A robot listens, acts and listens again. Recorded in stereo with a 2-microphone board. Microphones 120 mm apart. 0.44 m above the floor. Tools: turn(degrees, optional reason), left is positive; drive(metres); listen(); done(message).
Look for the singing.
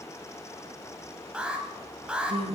turn(degrees=-50, reason="The singing: about 50° right or 130° right.")
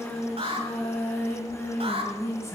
turn(degrees=25, reason="So it is at 25° left.")
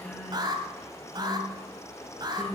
turn(degrees=10, reason="The singing is now 10° left.")
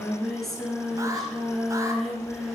done("Found it: singing, straight ahead.")